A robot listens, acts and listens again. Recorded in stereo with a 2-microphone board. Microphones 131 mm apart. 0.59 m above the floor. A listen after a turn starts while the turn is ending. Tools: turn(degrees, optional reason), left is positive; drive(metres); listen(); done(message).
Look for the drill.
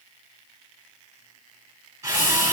turn(degrees=-25, reason="The drill: about 25° right or 155° right.")
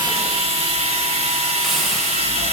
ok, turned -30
turn(degrees=-130, reason="So it is at 130° right.")
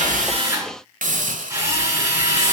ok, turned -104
turn(degrees=-25, reason="The drill is now 25° right.")
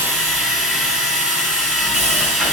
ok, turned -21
done("Found it: a drill, straight ahead.")